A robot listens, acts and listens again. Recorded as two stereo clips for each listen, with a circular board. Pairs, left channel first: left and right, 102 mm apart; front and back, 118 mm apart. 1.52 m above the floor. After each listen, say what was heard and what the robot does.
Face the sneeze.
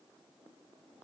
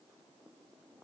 Keep listening.
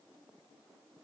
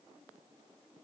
Keep listening.
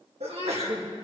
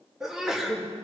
The sneeze: 95° right. Turn 95° right.
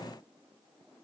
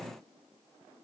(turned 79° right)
Nothing new. It was at 15° right. Turn 15° right.
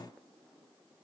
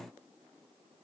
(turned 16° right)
I heard a sneeze from this way, but can't make it out now.